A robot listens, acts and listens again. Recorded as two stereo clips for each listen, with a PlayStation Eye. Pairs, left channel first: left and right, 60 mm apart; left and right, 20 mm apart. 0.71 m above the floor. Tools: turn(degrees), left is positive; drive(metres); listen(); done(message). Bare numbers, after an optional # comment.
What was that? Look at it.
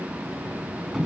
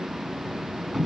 turn(-30)
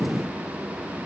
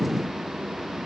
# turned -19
listen()
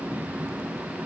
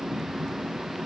listen()
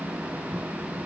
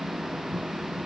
done("I heard a sliding door, but can't make it out now. It was about 15° left or 155° right.")